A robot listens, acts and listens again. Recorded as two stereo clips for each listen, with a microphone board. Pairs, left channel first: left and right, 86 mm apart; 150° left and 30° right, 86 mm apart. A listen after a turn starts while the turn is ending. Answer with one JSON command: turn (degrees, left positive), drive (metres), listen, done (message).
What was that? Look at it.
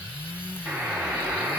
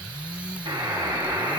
{"turn": -30}
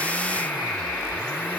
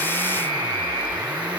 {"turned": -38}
{"turn": 10}
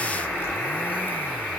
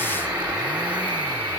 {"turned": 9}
{"done": "Found it: a buzzer, straight ahead."}